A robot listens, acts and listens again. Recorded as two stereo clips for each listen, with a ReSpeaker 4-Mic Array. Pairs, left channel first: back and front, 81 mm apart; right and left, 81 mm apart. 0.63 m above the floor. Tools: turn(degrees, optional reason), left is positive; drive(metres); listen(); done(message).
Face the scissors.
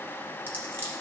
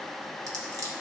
turn(degrees=60, reason="The scissors: 60° left.")
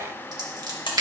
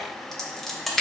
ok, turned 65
done("Facing the scissors, 1 to 2 m away.")